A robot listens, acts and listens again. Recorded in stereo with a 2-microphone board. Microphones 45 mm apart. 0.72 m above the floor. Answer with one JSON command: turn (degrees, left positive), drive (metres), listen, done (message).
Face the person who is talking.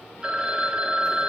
{"listen": true}
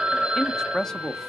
{"turn": 30}
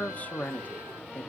{"turn": 135}
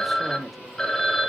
{"done": "Found it: a man speaking, straight ahead."}